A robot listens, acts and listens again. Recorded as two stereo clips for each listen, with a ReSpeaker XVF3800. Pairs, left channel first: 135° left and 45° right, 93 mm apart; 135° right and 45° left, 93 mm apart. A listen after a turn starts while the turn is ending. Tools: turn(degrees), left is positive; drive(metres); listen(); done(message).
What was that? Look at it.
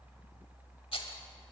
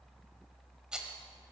turn(degrees=125)
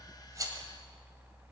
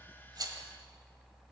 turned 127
listen()
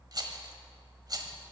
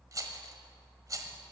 done("Facing the rattle, 1 to 2 m away.")